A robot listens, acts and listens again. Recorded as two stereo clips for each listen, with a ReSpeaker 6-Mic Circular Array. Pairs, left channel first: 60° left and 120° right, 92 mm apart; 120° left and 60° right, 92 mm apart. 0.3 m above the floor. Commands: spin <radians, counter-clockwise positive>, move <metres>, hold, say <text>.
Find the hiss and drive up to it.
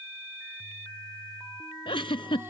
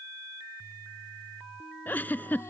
hold
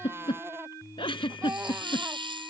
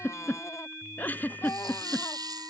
spin -1.75
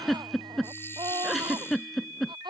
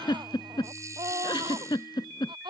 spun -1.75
hold
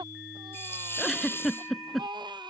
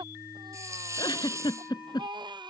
move 1.0
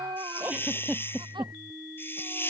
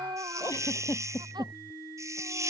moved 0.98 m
move 1.0
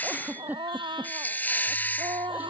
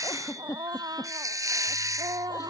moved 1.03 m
spin -0.17
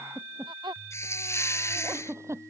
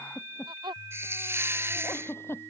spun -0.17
move 1.0
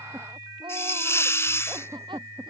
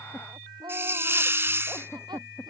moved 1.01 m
move 1.0
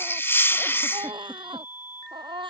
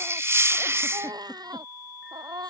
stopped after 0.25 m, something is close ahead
say I am next to the hiss.